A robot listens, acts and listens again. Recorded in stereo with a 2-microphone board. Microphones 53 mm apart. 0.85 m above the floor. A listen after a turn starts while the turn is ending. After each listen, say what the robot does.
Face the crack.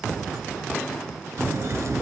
Turn 70° right.
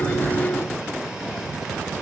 Keep listening.
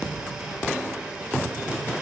I heard a crack, but can't make it out now. It was about straight ahead or 40° right.